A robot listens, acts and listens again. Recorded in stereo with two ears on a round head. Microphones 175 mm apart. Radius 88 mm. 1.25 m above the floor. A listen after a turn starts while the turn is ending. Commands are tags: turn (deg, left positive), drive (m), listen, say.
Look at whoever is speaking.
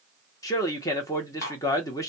<turn deg="15"/>
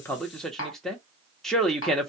<say>Facing the man speaking.</say>